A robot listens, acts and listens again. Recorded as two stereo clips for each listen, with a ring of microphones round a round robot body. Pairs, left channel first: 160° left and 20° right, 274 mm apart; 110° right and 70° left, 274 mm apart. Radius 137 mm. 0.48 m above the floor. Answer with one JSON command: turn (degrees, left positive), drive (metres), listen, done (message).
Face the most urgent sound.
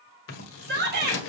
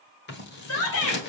{"turn": -75}
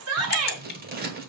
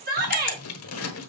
{"turn": 10}
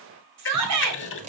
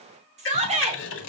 {"done": "Found it: a shout, straight ahead, 2 to 4 m away."}